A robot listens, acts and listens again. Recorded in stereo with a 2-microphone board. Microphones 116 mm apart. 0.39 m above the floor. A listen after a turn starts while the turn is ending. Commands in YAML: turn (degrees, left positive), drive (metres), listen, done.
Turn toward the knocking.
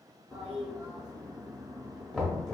turn: 30
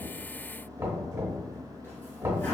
turn: -25
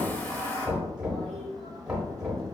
turn: -10
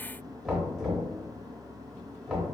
done: "Found it: knocking, straight ahead."